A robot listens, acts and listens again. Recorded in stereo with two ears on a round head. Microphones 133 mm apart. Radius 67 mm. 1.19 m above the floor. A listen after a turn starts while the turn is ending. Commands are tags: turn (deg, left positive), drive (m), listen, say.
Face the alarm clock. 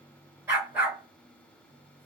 <listen/>
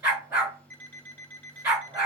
<turn deg="30"/>
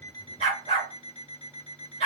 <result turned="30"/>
<turn deg="135"/>
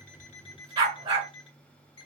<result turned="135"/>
<turn deg="35"/>
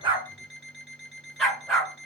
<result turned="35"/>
<say>Facing the alarm clock.</say>